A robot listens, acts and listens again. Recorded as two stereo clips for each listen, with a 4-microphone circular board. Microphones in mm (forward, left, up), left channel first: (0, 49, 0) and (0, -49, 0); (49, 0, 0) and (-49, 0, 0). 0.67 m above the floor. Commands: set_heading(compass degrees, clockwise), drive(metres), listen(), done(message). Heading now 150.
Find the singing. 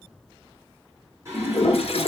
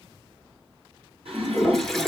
set_heading(305)
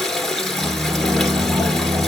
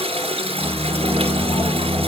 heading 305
set_heading(20)
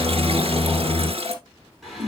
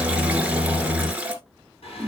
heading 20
done("Found it: singing, straight ahead.")